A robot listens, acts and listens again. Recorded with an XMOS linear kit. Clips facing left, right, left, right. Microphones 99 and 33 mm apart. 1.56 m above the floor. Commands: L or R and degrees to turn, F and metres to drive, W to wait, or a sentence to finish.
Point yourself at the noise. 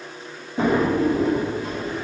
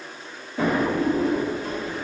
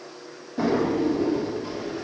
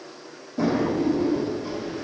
L20
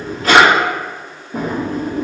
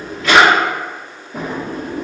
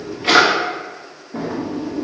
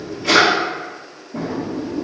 L135
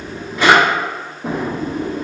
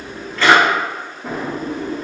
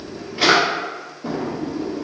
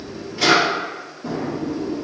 L20
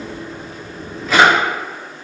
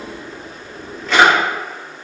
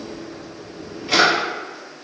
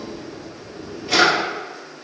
Found it: a drawer, straight ahead.